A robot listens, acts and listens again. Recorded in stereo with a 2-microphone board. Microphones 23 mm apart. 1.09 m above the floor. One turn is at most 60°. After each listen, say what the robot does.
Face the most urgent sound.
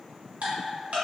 Keep listening.
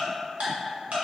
Keep listening.
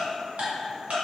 I can't make out anything urgent, only ticking.